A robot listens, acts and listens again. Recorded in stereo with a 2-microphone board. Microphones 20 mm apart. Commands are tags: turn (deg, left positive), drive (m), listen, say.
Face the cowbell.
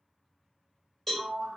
<turn deg="30"/>
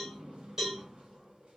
<turn deg="-20"/>
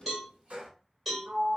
<say>Facing the cowbell, 2 to 4 m away.</say>